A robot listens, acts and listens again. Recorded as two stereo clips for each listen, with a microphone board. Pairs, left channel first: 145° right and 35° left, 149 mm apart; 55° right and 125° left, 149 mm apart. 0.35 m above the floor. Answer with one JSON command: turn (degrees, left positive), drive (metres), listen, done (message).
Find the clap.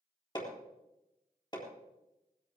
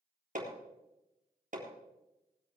{"listen": true}
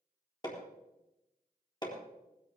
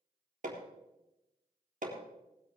{"listen": true}
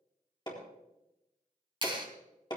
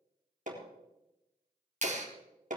{"turn": 90}
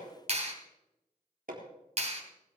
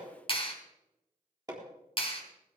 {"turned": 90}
{"done": "Facing the clap, 2 to 4 m away."}